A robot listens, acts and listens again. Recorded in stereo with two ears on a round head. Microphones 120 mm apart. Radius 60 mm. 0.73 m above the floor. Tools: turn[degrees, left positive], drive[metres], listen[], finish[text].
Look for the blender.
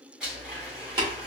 Action: turn[-30]
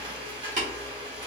Thought: So it is at 145° right.
Action: turn[-145]
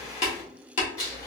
Thought: The blender is now 25° left.
Action: turn[25]
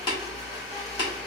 Action: finish[Found it: a blender, straight ahead.]